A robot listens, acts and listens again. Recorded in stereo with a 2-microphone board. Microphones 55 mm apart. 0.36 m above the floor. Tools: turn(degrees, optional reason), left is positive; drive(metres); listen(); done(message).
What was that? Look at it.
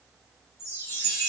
turn(degrees=55, reason="The chime: about 55° left or 125° left.")
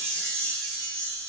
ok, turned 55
turn(degrees=20, reason="So it is at 20° left.")
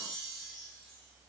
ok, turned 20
done("Facing the chime.")